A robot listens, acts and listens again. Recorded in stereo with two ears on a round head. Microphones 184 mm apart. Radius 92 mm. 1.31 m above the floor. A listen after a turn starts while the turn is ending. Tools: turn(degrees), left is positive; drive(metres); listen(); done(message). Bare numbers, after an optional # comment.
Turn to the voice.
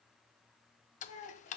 # The child speaking: about 45° left or 135° left.
turn(45)
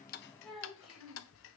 done("Found it: a child speaking, straight ahead.")